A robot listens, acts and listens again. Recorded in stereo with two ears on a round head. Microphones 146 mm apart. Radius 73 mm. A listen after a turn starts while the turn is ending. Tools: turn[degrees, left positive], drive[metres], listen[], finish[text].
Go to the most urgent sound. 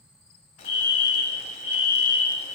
Thought: The fire alarm: about 35° left or 145° left.
Action: turn[35]
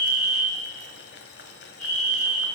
Action: drive[1.0]
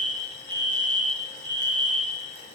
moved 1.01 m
Action: drive[1.0]
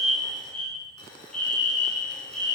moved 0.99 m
Action: drive[1.0]
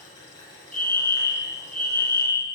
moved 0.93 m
Thought: The fire alarm is now 15° left.
Action: turn[15]
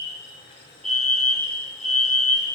Thought: The fire alarm is now 10° left.
Action: turn[10]
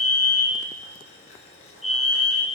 Action: drive[1.0]
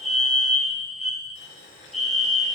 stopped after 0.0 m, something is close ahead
Action: finish[I am next to the fire alarm.]